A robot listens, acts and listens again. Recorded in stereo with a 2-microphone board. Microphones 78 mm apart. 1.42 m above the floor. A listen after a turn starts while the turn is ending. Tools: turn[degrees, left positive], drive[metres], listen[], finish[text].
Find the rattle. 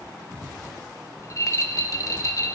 Thought: The rattle: about 45° left or 135° left.
Action: turn[45]
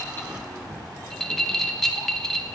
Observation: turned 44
Thought: So it is at 10° left.
Action: turn[10]
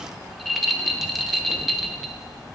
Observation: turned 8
Action: finish[Facing the rattle, under 1 m away.]